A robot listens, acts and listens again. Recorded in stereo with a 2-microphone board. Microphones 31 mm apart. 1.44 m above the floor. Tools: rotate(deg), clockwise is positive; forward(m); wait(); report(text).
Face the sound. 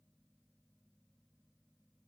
wait()
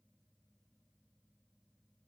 wait()
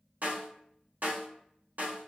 rotate(65)
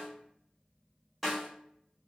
report("Found it: a snare drum, straight ahead, 1 to 2 m away.")